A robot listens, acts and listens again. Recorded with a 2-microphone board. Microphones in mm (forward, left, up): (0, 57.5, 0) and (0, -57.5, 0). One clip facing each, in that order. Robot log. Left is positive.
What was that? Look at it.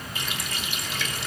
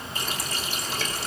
note: The running tap: about 40° right or 140° right.
cmd yaw -40
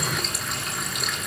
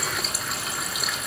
end: Facing the running tap, 2 to 4 m away.